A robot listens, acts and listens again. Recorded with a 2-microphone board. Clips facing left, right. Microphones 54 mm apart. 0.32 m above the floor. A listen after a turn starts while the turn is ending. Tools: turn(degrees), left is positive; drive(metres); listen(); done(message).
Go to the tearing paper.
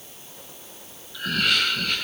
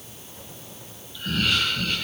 listen()
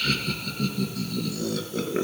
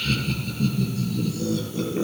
listen()
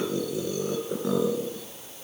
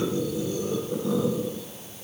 done("I can't make out tearing paper, only laughter.")